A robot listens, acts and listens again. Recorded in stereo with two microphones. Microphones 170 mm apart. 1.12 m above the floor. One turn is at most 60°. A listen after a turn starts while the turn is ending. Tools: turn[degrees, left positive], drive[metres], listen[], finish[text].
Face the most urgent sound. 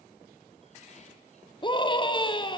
Thought: The scream: about 30° left or 150° left.
Action: turn[30]
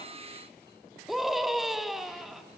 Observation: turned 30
Action: finish[Facing the scream.]